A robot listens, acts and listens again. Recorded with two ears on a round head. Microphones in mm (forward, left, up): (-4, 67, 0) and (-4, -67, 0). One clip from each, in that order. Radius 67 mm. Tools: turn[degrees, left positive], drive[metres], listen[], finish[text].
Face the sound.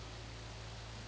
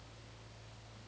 Action: listen[]
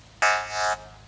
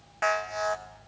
Thought: The alarm: about 60° left or 120° left.
Action: turn[60]
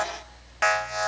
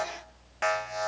Thought: So it is at 30° left.
Action: turn[30]
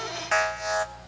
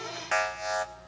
Action: finish[Found it: an alarm, straight ahead, 1 to 2 m away.]